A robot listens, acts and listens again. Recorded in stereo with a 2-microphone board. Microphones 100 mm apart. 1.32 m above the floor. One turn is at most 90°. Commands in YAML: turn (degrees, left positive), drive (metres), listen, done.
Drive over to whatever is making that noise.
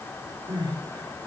turn: -50
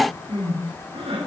turn: -75
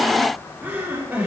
turn: -20
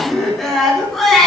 drive: 1.0
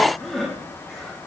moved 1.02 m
drive: 1.0
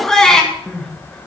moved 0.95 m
drive: 1.0
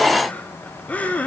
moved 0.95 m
turn: 15
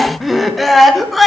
drive: 1.0
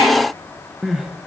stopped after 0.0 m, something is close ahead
done: "Arrived at the crying, straight ahead."